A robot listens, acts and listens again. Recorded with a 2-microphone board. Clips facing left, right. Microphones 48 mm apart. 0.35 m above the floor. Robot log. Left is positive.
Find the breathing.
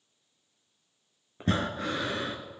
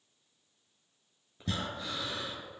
note: The breathing: about 40° left or 140° left.
cmd yaw +40
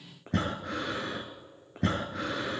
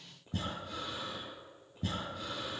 note: So it is at 100° left.
cmd yaw +100
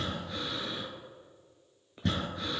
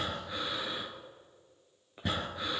note: The breathing is now 10° right.
cmd yaw -10
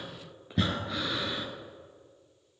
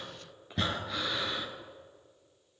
end: Facing the breathing.